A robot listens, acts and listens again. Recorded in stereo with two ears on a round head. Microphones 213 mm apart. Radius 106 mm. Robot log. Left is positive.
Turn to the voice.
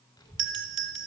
note: The child speaking: about 20° left or 160° left.
cmd yaw +20
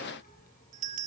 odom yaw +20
note: So it is at 140° left.
cmd yaw +140
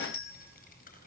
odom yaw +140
note: The child speaking is now 40° left.
cmd yaw +40
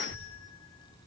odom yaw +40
note: The child speaking is now 20° left.
cmd yaw +20
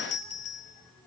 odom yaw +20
end: Facing the child speaking, over 4 m away.